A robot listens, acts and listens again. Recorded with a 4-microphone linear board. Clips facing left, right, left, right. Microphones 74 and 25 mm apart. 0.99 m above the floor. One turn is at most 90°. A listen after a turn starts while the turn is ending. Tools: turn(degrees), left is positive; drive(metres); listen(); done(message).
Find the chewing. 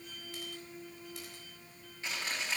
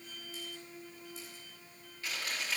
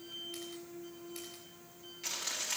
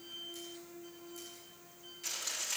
turn(degrees=25)
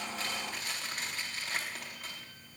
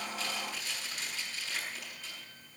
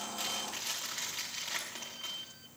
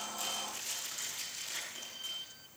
turn(degrees=90)
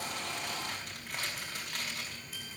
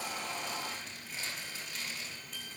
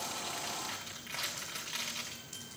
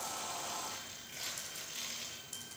turn(degrees=65)
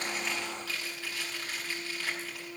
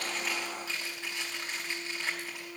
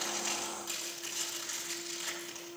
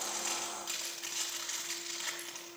turn(degrees=-20)
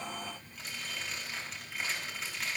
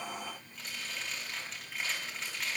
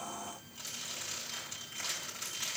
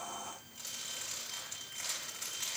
done("Found it: chewing, straight ahead.")